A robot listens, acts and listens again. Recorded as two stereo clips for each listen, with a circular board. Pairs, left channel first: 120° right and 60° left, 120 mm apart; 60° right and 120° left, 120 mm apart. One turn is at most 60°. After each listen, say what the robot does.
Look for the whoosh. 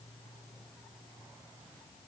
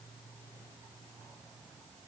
Keep listening.
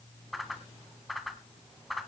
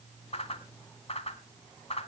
Turn 30° right.
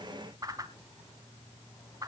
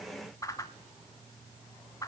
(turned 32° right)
Found it: a whoosh, straight ahead.